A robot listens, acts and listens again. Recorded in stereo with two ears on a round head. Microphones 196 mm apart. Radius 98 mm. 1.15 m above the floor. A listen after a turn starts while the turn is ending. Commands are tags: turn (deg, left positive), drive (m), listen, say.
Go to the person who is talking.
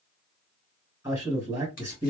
<turn deg="-30"/>
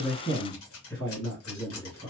<turn deg="20"/>
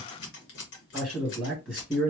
<drive m="1.0"/>
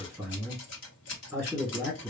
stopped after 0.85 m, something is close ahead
<say>Arrived at the man speaking, straight ahead.</say>